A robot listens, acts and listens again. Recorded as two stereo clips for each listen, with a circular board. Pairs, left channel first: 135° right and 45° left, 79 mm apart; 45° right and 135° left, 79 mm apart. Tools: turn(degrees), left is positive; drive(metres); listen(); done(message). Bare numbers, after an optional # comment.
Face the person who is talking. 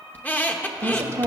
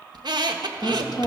# The woman speaking: 10° right.
turn(-10)
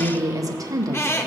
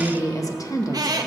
done("Facing the woman speaking.")